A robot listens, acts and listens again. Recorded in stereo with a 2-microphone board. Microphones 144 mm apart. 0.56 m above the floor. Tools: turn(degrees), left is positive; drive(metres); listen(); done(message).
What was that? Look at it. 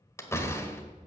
turn(degrees=20)
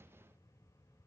listen()
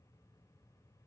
done("I heard a door slam, but can't make it out now. It was about straight ahead or 140° left.")